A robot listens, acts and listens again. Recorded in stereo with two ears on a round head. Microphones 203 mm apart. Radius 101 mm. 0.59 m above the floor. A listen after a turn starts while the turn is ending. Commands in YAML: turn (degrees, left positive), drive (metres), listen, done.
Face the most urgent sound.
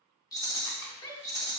turn: 20
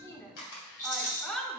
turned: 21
done: "Facing the shout."